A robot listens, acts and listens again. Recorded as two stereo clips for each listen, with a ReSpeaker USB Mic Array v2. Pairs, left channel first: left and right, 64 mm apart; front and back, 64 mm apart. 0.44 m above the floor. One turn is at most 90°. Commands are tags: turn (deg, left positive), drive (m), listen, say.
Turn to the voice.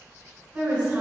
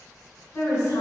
<turn deg="-30"/>
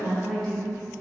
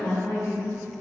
<say>Facing the woman speaking.</say>